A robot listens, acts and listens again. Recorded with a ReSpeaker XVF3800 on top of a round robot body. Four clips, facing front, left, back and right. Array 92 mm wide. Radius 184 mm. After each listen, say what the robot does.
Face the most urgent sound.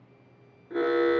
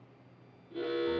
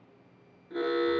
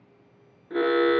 Turn 70° right.
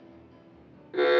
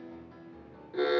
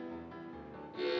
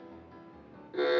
Facing the alarm, 1 to 2 m away.